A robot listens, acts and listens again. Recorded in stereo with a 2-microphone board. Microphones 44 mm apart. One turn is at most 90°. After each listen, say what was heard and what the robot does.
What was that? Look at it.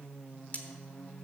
The cutlery clinking: about 40° left or 140° left. Turn 40° left.
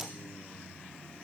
Keep listening.
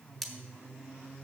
Facing the cutlery clinking, 1 to 2 m away.